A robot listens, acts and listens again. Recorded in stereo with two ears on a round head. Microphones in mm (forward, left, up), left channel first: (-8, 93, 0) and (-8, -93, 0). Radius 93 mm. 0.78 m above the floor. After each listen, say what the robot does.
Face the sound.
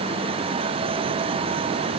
Keep listening.
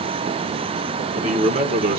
Turn 45° right.
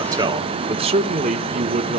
Turn 45° right.
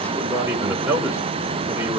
Turn 10° right.
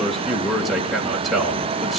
Facing the man speaking, 2 to 4 m away.